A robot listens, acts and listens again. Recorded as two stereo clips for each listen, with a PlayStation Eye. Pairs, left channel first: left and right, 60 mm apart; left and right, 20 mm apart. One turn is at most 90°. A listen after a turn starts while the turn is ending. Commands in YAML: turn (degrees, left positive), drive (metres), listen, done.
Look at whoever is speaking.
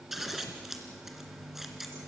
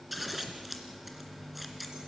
listen: true
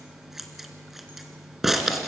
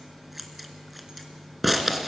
listen: true
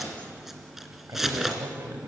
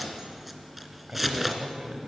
turn: -60
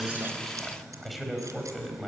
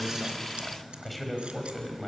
done: "Facing the man speaking, over 4 m away."